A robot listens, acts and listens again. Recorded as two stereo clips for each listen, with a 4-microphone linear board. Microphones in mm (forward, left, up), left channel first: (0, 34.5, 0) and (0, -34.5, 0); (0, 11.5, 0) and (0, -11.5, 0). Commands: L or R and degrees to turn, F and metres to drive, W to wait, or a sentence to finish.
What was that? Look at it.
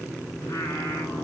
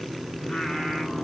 W
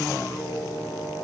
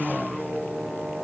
L50
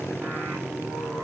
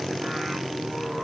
W
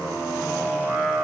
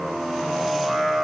Found it: singing, straight ahead.